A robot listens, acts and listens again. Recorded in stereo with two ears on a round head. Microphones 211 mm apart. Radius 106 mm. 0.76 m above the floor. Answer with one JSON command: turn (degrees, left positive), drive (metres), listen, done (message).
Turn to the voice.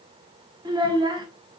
{"turn": -20}
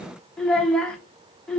{"done": "Found it: a child speaking, straight ahead, 1 to 2 m away."}